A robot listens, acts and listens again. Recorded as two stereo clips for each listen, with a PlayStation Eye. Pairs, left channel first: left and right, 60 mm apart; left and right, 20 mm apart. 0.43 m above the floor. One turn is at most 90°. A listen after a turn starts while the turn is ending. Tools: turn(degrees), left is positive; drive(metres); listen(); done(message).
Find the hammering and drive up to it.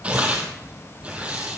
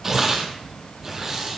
listen()
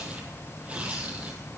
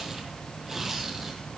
listen()
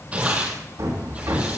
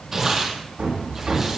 turn(degrees=-70)
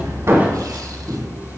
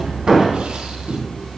turn(degrees=-30)
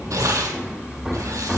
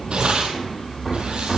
turn(degrees=-10)
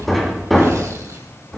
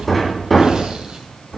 drive(metres=1.0)
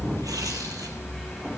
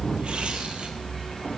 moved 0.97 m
drive(metres=1.0)
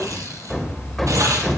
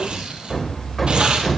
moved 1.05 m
drive(metres=1.0)
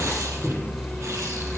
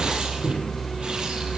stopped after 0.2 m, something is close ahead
done("I am next to the hammering.")